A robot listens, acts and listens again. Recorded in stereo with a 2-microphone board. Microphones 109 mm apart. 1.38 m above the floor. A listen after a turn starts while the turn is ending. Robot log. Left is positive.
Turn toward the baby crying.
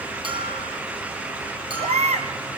cmd yaw -90
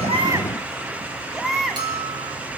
end: Found it: a baby crying, straight ahead, 2 to 4 m away.